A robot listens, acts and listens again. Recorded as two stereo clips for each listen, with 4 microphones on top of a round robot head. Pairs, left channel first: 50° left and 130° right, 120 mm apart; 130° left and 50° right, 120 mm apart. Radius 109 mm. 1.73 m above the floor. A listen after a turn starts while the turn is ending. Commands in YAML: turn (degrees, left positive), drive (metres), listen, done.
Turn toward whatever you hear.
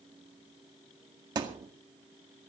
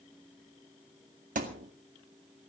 turn: -70
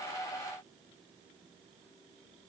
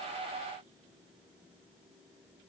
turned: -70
done: "Facing where the thud came from. I can't hear it now."